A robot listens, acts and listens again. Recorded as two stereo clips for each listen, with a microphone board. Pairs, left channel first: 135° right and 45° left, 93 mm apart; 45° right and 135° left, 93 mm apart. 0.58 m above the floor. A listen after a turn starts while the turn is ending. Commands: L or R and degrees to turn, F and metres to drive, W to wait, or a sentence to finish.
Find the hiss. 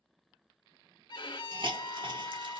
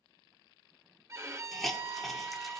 L45
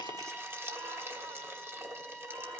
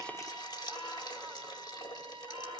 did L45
R15
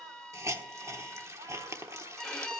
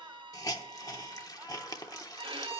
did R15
Found it: a hiss, straight ahead.